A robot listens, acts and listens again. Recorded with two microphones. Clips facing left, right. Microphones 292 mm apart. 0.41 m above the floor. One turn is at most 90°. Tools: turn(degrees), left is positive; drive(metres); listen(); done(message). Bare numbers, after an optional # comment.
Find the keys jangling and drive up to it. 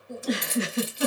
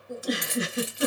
# The keys jangling: about 55° right or 125° right.
turn(-55)
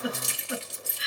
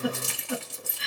# So it is at 60° right.
turn(-60)
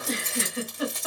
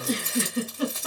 drive(1.0)
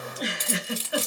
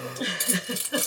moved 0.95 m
# The keys jangling is now 15° right.
turn(-15)
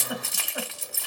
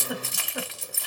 drive(1.0)
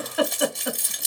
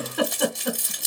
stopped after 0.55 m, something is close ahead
done("I am next to the keys jangling.")